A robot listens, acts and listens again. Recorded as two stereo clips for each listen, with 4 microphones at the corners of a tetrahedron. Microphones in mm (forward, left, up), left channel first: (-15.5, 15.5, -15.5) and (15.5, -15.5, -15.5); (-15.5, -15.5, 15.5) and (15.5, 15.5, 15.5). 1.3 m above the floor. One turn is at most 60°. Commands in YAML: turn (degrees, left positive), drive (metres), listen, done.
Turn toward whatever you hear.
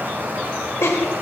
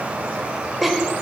turn: 60
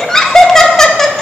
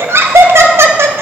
turn: 55
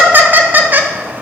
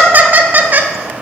done: "Facing the laughter, 1 to 2 m away."